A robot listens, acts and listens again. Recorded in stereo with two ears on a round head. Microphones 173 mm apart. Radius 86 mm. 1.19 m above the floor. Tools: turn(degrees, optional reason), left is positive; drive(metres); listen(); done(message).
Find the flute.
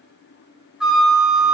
turn(degrees=-30)
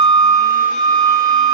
turn(degrees=-150, reason="So it is at 150° right.")
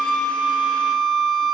done("Found it: a flute, straight ahead.")